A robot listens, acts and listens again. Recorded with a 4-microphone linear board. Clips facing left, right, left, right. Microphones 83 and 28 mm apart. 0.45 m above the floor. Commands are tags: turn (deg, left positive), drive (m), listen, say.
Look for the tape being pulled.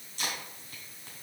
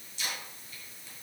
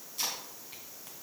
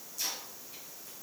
<turn deg="50"/>
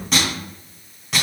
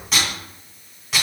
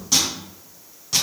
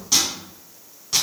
<say>Facing the tape being pulled.</say>